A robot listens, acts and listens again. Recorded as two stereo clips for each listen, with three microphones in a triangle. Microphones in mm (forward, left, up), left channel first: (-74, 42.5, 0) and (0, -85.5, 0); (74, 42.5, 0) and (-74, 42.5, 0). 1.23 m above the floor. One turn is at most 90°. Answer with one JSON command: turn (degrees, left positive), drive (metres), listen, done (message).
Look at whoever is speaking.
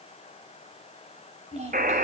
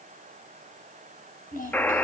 {"turn": -20}
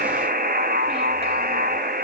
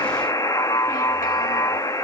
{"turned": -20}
{"listen": true}
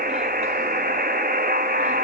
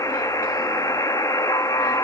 {"listen": true}
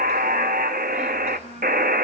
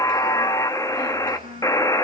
{"turn": -25}
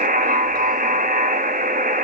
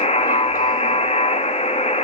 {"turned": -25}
{"listen": true}
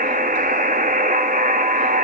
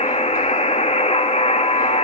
{"listen": true}
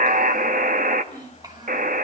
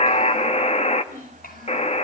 {"done": "Found it: a child speaking, straight ahead, over 4 m away."}